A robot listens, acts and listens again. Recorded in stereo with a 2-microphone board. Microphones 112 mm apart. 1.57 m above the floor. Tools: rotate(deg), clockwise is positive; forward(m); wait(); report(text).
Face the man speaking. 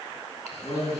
rotate(-40)
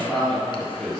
report("Found it: a man speaking, straight ahead.")